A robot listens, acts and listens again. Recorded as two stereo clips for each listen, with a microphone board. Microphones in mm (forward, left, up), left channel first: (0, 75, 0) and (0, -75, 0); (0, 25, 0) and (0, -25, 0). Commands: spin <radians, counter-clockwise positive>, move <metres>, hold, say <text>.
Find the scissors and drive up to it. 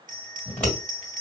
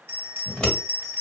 spin 0.52
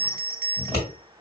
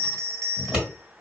spin -0.26
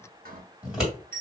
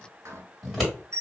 move 1.0
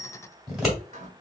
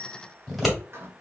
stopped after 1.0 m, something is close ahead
say I am next to the scissors.